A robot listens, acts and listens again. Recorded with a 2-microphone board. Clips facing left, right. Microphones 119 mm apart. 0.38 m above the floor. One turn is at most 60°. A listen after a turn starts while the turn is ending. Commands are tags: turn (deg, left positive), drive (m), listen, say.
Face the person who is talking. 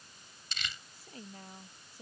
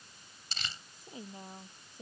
<turn deg="-20"/>
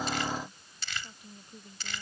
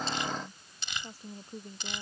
<turn deg="-60"/>
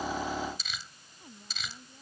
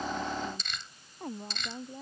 <turn deg="-60"/>
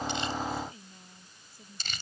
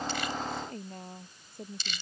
<turn deg="-60"/>
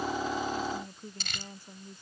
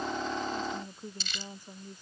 <turn deg="-15"/>
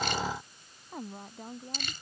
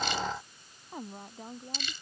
<say>Found it: a woman speaking, straight ahead.</say>